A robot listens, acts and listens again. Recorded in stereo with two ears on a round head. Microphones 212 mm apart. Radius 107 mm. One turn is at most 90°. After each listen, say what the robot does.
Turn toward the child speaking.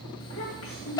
Turn 70° left.
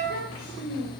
Turn 40° left.
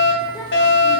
Turn 10° left.
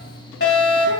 Keep listening.
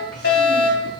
Keep listening.
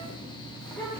Facing the child speaking, 1 to 2 m away.